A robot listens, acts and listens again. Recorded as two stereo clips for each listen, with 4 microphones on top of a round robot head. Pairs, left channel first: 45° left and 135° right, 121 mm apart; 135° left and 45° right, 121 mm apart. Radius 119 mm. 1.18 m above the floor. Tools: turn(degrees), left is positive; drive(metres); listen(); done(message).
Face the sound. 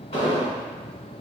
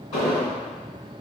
turn(degrees=80)
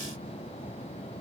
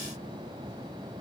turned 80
done("Facing where the explosion came from. I can't hear it now.")